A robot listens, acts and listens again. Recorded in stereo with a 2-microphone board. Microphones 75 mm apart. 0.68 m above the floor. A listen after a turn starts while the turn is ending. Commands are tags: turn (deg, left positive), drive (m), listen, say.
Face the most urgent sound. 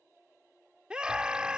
<turn deg="-30"/>
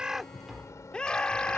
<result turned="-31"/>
<turn deg="15"/>
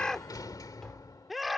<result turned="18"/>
<say>Facing the scream.</say>